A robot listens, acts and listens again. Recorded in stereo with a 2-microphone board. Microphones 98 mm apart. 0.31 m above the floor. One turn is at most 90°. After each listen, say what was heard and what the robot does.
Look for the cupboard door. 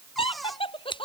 Turn 30° left.
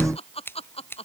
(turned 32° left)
Keep listening.
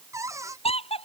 So it is at 30° right. Turn 30° right.
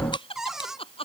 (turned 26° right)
Found it: a cupboard door, straight ahead.